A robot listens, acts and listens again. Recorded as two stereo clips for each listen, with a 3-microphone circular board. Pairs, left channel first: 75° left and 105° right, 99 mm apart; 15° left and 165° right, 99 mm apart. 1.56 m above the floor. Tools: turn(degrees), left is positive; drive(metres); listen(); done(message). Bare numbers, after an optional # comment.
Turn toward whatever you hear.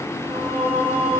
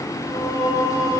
# The singing: 35° right.
turn(-35)
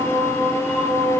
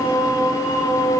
done("Facing the singing.")